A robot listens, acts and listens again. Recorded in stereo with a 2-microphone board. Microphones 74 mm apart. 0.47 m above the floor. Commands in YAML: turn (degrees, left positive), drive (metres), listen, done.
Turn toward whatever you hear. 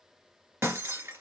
turn: -35
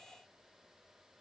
listen: true
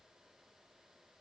done: "I heard breaking glass, but can't make it out now. It was about straight ahead or 110° right."